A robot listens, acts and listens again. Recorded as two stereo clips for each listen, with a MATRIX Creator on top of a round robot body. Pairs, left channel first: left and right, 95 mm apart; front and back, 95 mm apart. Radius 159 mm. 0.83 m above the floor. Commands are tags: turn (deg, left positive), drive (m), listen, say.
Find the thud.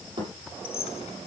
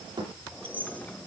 <turn deg="-130"/>
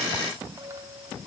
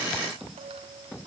<say>I heard a thud from this way, but can't make it out now.</say>